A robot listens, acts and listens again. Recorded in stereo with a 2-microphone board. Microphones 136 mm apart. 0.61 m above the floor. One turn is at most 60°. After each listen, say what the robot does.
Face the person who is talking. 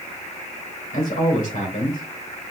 Turn 60° left.
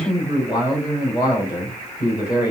Turn 35° left.
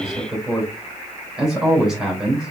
Facing the man speaking.